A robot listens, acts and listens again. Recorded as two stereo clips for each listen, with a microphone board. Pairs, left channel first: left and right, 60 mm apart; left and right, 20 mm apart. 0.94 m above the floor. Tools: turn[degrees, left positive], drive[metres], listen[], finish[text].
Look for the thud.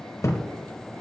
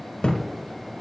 Thought: The thud: about 55° left or 125° left.
Action: turn[55]
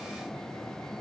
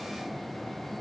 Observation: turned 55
Action: listen[]
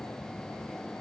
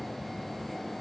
Action: finish[I heard a thud, but can't make it out now. It was about straight ahead or 70° left.]